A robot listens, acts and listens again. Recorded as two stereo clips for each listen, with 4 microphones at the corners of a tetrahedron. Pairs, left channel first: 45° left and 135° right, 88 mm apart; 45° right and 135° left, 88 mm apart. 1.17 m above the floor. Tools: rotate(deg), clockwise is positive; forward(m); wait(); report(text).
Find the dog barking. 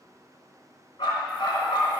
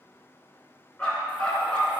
rotate(-30)
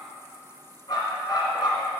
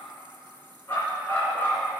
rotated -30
rotate(-15)
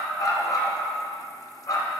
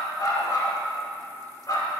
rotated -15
report("Found it: a dog barking, straight ahead, 2 to 4 m away.")